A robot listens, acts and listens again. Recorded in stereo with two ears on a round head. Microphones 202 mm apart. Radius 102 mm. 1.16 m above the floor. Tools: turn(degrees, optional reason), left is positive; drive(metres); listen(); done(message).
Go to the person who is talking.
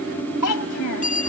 turn(degrees=90)
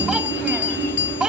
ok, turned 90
drive(metres=1.0)
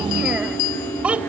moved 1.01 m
drive(metres=1.0)
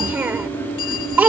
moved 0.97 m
turn(degrees=-10, reason="The child speaking is now 10° right.")
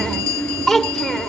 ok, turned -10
drive(metres=1.0)
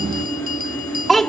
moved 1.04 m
drive(metres=1.0)
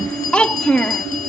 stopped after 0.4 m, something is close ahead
done("I am next to the child speaking.")